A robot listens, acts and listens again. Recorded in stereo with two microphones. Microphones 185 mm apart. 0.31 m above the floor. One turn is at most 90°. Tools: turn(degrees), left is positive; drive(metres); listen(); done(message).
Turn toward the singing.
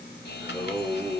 turn(degrees=30)
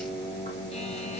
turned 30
turn(degrees=90)
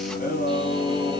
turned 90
turn(degrees=40)
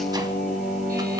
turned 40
done("Facing the singing.")